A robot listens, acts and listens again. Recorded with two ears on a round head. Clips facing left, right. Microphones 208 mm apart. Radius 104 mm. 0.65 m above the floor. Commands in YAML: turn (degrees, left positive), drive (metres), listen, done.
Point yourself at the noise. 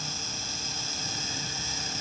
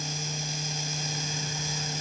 listen: true
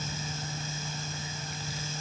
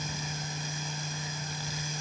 listen: true
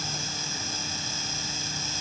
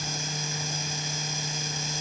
done: "I can't make out anything."